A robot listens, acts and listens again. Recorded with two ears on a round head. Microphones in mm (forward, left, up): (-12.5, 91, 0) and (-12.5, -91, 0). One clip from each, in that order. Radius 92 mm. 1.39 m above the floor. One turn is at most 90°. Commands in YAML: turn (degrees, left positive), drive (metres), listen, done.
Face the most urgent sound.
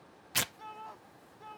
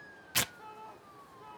turn: 25
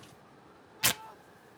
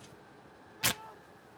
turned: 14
turn: 15
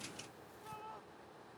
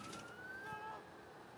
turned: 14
done: "Facing the shout."